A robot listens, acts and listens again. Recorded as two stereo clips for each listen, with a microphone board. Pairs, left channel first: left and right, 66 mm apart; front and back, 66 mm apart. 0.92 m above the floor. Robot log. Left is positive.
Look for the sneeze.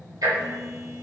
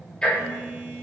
cmd idle
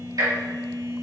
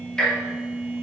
cmd idle
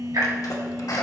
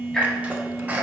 note: The sneeze: 115° left.
cmd yaw +115
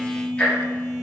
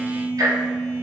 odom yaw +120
end: Facing where the sneeze came from. I can't hear it now.